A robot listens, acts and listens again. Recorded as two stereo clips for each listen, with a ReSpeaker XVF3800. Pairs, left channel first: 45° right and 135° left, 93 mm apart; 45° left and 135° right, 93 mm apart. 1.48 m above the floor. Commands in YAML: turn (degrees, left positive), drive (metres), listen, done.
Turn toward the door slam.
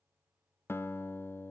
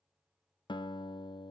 listen: true
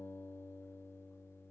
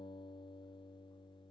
listen: true
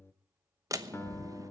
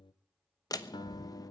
turn: 85
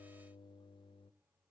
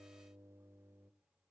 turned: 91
done: "Facing where the door slam came from. I can't hear it now."